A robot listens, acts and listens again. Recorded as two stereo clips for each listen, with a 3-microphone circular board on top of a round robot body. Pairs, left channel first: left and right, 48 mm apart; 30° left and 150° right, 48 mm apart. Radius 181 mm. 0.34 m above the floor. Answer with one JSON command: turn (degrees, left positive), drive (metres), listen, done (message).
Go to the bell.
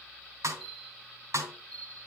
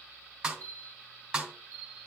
{"turn": 175}
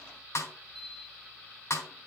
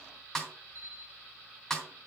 {"drive": 1.0}
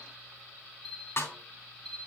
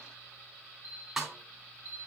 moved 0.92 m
{"drive": 1.0}
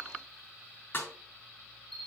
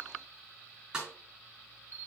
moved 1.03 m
{"drive": 1.0}
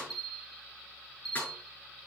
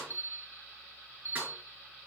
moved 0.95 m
{"drive": 1.0}
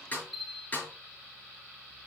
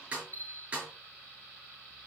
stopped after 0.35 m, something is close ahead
{"done": "I am next to the bell."}